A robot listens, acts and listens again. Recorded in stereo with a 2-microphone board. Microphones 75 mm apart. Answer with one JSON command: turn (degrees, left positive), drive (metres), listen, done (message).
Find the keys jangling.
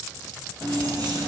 {"turn": -70}
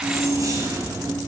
{"turn": -50}
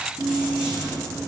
{"turn": -10}
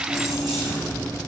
{"done": "Facing the keys jangling."}